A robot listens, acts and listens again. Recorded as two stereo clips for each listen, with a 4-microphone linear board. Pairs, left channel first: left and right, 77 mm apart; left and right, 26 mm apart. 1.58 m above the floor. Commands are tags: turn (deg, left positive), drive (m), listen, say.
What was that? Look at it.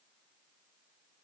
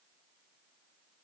<listen/>
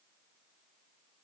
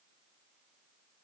<listen/>
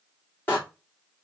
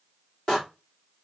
<turn deg="25"/>
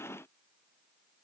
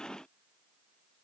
<listen/>
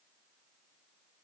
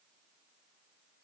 <say>I heard a door slam, but can't make it out now. It was about straight ahead or 130° left.</say>